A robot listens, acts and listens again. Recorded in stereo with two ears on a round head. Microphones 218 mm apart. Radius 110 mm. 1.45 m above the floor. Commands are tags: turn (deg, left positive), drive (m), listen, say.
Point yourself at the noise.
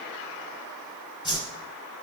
<turn deg="20"/>
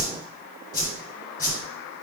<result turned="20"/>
<turn deg="140"/>
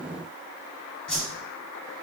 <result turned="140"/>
<say>Facing the whoosh, 2 to 4 m away.</say>